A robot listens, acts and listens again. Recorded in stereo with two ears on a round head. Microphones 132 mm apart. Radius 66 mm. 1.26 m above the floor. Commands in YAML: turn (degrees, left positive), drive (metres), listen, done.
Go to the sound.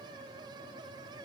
listen: true
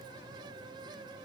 listen: true
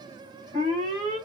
turn: 35
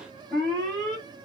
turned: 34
drive: 1.0
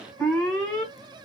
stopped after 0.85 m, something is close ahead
turn: 10
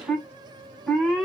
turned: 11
done: "Arrived at the alarm, straight ahead."